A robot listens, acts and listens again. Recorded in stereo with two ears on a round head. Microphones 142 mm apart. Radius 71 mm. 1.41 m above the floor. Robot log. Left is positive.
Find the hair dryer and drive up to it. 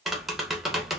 cmd idle
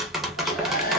note: The hair dryer: about 60° left or 120° left.
cmd yaw +60
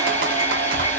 note: So it is at 15° left.
cmd yaw +15
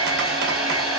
cmd fwd 1.0
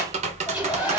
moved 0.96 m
note: The hair dryer is now 10° right.
cmd yaw -10
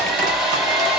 cmd fwd 1.0
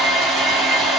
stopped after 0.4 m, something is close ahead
end: I am next to the hair dryer.